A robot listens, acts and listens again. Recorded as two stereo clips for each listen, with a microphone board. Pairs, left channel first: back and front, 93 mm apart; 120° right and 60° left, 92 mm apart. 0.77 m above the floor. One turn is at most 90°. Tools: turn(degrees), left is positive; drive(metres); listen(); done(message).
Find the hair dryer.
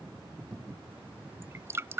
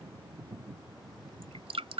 listen()
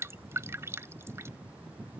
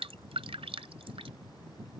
listen()
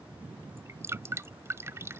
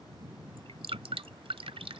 done("I can't make out a hair dryer to turn to.")